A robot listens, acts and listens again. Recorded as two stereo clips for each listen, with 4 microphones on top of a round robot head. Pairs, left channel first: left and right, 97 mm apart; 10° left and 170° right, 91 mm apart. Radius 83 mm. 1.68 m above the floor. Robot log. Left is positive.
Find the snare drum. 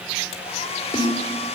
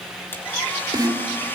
note: The snare drum: 145° left.
cmd yaw +145
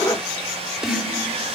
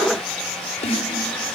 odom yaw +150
end: Facing the snare drum.